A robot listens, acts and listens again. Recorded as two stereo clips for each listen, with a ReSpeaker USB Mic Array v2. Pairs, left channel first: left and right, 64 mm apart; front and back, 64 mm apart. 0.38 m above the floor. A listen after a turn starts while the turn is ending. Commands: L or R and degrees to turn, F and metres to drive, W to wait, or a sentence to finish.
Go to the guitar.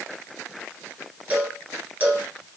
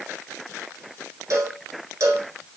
W
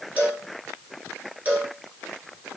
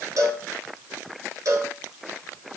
W
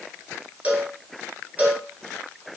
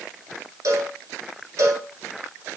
I can't make out a guitar to turn to.